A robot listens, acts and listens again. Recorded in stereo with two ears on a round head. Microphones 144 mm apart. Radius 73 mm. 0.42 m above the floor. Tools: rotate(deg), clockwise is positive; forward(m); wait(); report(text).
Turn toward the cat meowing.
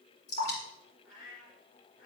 rotate(-60)
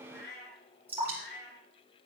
rotate(-75)
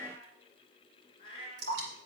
rotate(-35)
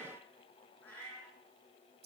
rotate(-10)
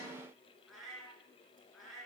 report("Facing the cat meowing.")